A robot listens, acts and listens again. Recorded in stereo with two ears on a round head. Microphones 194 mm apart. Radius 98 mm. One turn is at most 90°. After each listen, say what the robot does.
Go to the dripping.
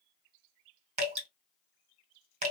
Turn 35° right.
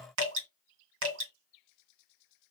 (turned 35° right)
Turn 90° right.
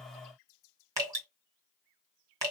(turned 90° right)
Turn 15° right.
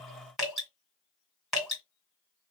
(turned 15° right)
Drive 1.0 m forward.
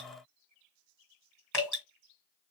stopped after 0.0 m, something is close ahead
Blocked. The dripping is further on, straight ahead.